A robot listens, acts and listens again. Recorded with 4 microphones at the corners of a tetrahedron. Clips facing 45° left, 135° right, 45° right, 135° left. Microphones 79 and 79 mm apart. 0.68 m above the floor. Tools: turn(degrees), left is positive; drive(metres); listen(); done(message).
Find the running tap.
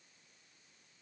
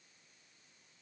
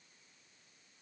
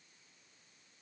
listen()
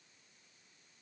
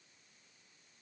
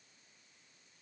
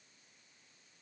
listen()
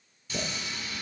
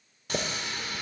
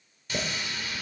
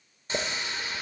turn(degrees=-165)
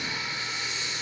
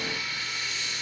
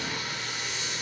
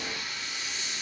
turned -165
turn(degrees=-20)
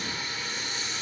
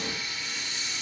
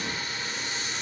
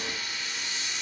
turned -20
done("Facing the running tap, 1 to 2 m away.")